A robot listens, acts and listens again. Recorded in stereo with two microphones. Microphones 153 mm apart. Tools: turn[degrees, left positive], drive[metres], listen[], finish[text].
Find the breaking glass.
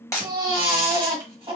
Thought: The breaking glass: about 20° left or 160° left.
Action: turn[20]
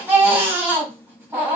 Action: listen[]
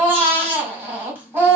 Action: finish[I heard breaking glass, but can't make it out now. It was about straight ahead or 140° left.]